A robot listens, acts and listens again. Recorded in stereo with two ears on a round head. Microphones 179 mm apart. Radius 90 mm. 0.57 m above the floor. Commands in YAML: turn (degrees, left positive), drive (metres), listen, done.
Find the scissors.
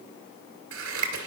turn: -90
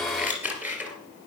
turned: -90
turn: -10
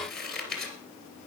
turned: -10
done: "Facing the scissors, 2 to 4 m away."